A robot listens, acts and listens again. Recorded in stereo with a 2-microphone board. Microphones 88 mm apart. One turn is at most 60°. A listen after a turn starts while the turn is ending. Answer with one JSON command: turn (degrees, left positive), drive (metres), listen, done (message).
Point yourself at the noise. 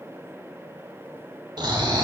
{"turn": -55}
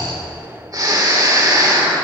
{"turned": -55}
{"turn": -55}
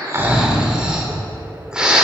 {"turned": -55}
{"turn": -10}
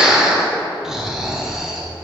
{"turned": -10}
{"done": "Facing the snoring, under 1 m away."}